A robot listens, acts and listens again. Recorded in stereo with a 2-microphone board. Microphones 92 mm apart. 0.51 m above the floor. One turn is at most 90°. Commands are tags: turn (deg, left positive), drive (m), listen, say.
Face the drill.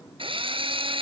<turn deg="-90"/>
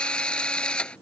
<turn deg="10"/>
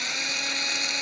<say>Facing the drill.</say>